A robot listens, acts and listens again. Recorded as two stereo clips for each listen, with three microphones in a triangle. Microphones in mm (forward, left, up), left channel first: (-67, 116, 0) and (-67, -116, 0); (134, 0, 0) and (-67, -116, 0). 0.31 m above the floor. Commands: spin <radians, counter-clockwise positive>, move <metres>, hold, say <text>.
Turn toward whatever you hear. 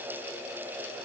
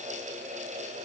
hold
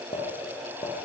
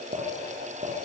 spin 2.71
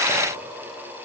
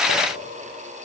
hold
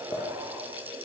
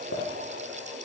hold
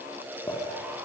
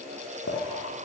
spin 0.35
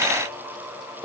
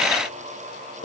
say Found it: a clink, straight ahead.